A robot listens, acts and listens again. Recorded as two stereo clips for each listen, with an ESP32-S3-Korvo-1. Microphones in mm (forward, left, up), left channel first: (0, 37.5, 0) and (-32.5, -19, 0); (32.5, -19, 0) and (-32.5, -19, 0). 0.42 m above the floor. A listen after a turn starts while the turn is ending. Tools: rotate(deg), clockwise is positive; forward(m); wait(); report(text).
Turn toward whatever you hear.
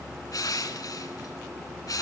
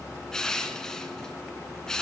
rotate(-80)
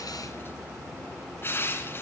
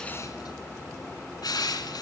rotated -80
report("Found it: crushing, straight ahead, 1 to 2 m away.")